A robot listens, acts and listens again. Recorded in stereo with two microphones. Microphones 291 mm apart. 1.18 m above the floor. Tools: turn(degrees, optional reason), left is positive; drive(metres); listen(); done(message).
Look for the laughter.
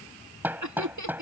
turn(degrees=-75, reason="The laughter: about 75° right or 105° right.")
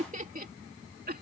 turn(degrees=-30, reason="So it is at 30° right.")
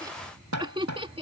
turn(degrees=-20, reason="The laughter is now 20° right.")
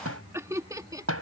turn(degrees=-15, reason="The laughter is now 15° right.")
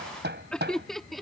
done("Facing the laughter.")